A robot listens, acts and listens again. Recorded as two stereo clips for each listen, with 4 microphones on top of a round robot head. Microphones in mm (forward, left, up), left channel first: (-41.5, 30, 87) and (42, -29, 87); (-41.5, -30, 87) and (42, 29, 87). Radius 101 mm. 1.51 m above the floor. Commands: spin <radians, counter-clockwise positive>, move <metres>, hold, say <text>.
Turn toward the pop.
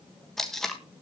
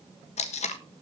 hold
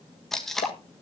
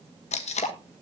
spin 2.88
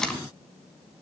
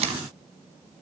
say I heard a pop from this way, but can't make it out now.